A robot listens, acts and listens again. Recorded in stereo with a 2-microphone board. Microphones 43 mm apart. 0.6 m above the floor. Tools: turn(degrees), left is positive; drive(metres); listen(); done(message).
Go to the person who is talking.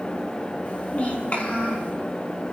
turn(degrees=35)
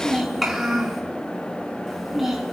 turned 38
drive(metres=1.0)
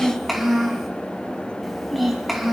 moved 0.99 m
drive(metres=1.0)
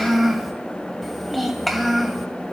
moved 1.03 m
drive(metres=1.0)
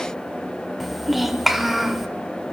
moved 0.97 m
drive(metres=1.0)
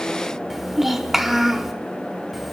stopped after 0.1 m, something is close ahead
done("Arrived at the child speaking, straight ahead.")